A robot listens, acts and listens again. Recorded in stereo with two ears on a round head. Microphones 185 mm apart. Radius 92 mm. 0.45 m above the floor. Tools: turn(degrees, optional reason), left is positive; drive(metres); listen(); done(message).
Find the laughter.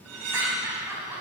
turn(degrees=-30)
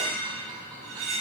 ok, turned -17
listen()
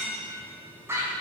turn(degrees=-30)
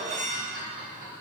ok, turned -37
turn(degrees=-140, reason="So it is at 140° right.")
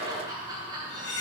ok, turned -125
turn(degrees=-20, reason="The laughter is now 20° right.")
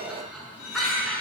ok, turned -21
done("Facing the laughter, over 4 m away.")